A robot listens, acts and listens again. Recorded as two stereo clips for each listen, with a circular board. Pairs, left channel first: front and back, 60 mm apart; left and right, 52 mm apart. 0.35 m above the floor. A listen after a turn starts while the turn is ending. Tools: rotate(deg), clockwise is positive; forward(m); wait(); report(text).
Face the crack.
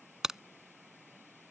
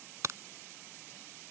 rotate(100)
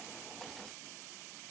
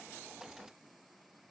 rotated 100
report("I heard a crack from this way, but can't make it out now.")